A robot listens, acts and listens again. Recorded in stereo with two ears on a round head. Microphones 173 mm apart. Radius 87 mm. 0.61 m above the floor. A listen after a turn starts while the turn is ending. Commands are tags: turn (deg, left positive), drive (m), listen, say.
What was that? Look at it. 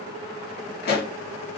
<turn deg="55"/>
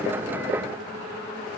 <listen/>
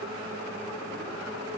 <say>I heard a pop, but can't make it out now. It was about straight ahead or 70° left.</say>